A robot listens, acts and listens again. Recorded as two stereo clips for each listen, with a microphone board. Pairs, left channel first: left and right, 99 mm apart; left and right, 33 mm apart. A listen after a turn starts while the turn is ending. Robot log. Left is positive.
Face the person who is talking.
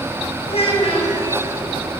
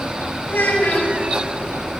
cmd yaw +90
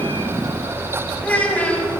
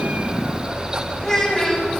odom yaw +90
note: So it is at 15° left.
cmd yaw +15
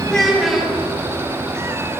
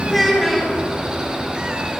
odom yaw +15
end: Facing the child speaking, over 4 m away.